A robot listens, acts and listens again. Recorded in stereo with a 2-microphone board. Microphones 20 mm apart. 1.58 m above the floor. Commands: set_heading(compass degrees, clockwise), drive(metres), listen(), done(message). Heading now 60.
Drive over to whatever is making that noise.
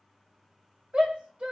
set_heading(115)
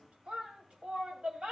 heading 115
set_heading(185)
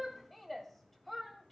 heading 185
drive(1.0)
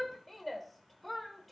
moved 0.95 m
drive(1.0)
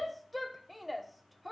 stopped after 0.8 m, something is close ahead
done("I am next to the shout.")